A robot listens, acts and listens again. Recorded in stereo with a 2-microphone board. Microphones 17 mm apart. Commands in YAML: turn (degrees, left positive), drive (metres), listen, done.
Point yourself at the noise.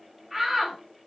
turn: -20
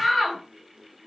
done: "Found it: a shout, straight ahead."